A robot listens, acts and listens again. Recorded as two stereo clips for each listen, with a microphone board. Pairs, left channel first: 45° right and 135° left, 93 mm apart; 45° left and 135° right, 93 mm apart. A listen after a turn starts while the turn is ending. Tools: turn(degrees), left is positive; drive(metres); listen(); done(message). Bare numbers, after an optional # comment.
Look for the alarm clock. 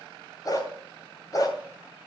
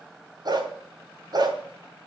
listen()
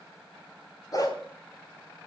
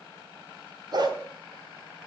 listen()
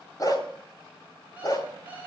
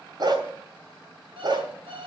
# The alarm clock: 150° right.
turn(-150)
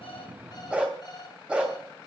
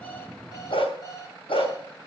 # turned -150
done("Found it: an alarm clock, straight ahead.")